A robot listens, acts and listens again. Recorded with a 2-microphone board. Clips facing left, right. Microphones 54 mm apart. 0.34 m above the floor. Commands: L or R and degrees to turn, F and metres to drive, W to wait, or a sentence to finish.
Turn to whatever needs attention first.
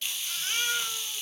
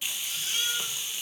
L45
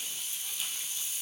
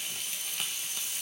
W
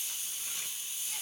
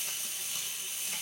W
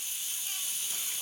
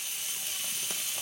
I heard a baby crying, but can't make it out now. It was about straight ahead or 90° left.